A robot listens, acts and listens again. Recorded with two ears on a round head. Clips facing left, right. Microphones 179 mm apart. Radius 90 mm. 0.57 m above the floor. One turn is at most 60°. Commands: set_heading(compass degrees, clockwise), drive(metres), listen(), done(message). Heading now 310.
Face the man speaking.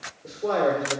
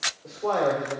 set_heading(285)
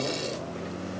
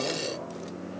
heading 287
listen()
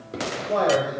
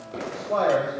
set_heading(272)
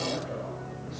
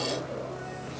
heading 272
listen()
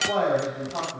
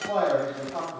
set_heading(242)
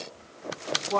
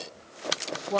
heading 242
set_heading(257)
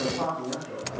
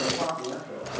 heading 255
done("Found it: a man speaking, straight ahead.")